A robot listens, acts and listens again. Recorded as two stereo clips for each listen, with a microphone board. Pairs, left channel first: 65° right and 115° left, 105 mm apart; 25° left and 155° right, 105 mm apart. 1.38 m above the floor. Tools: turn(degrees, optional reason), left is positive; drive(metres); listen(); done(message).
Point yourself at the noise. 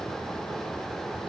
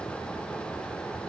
listen()
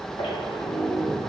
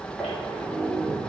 turn(degrees=-70, reason="The squeak: 70° right.")
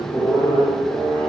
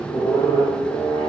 done("Facing the squeak.")